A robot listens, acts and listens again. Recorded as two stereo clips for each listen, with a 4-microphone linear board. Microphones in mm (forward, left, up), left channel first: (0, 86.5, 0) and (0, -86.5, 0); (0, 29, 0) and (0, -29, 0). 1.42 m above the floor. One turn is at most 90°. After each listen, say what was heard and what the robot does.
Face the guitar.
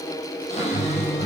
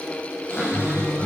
The guitar: about 55° left or 125° left. Turn 55° left.
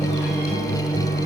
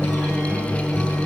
So it is at 65° left. Turn 65° left.
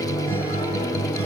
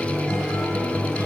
The guitar is now 15° left. Turn 15° left.
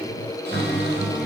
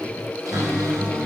Facing the guitar, over 4 m away.